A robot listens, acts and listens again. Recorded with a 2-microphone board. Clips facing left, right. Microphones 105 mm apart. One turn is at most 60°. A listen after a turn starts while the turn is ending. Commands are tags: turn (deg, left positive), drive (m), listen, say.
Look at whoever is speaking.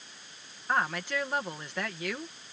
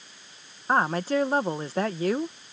<turn deg="-35"/>
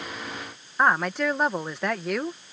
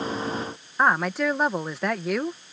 <say>Facing the woman speaking.</say>